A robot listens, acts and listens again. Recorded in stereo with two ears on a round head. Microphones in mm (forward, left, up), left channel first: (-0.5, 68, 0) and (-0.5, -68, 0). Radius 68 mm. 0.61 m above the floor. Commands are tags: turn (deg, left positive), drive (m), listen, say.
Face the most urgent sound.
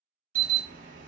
<turn deg="-55"/>
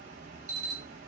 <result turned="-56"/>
<turn deg="-60"/>
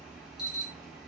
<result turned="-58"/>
<say>Found it: an alarm, straight ahead.</say>